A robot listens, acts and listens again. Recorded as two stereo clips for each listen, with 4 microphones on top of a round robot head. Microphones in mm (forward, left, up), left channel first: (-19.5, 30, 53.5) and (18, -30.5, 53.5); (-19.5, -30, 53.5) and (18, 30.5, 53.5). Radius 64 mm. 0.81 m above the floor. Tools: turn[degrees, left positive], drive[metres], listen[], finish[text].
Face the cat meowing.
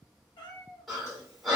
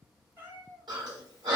Thought: The cat meowing: 115° left.
Action: turn[115]
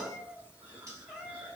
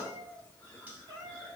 Thought: The cat meowing is now 30° left.
Action: turn[30]
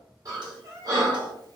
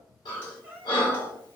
Thought: The cat meowing is now 10° right.
Action: turn[-10]
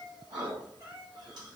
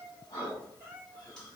Action: finish[Facing the cat meowing.]